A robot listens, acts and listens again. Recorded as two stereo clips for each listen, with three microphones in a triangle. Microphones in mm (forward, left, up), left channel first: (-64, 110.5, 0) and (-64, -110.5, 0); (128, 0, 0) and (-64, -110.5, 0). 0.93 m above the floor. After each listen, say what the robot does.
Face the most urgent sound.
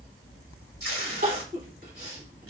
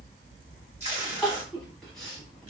Turn 55° right.
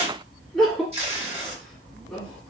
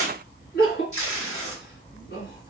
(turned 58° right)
Found it: crying, straight ahead.